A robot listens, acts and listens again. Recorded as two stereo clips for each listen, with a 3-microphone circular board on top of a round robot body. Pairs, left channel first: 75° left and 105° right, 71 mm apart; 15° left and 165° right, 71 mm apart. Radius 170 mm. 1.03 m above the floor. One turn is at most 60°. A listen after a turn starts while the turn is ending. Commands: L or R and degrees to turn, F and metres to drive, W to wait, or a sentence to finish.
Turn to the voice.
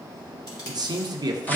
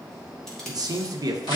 R60
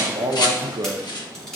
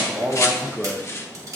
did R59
R60
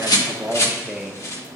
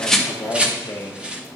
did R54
R20
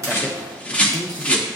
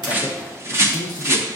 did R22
Facing the man speaking, under 1 m away.